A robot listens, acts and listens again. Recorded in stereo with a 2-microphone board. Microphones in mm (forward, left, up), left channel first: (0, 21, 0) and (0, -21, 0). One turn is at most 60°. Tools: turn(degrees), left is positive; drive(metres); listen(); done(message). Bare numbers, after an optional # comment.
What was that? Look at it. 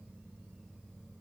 listen()
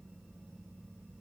listen()
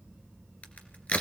# The crack: about 35° left or 145° left.
turn(35)
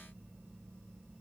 listen()
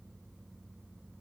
done("I heard a crack, but can't make it out now. It was about straight ahead or 110° left.")